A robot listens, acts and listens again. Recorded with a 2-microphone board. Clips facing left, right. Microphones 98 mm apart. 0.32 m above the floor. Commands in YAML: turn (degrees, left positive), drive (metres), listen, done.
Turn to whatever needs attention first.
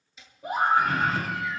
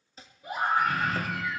turn: 65
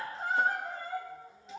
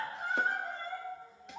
done: "Facing the scream."